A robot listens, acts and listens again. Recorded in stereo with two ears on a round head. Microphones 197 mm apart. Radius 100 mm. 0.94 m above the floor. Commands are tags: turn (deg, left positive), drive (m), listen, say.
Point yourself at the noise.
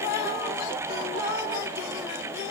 <listen/>
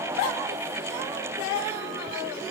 <listen/>
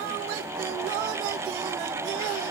<say>I can't make out anything to turn to.</say>